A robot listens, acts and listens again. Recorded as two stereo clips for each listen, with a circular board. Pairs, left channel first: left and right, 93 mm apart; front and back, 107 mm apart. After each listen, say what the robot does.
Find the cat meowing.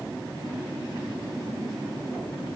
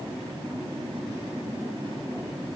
Keep listening.
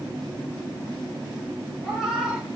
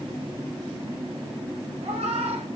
Turn 175° right.
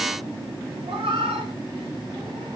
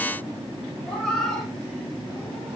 Turn 85° right.
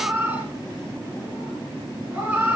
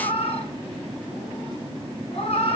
Turn 15° right.
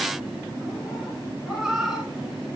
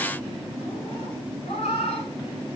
Found it: a cat meowing, straight ahead.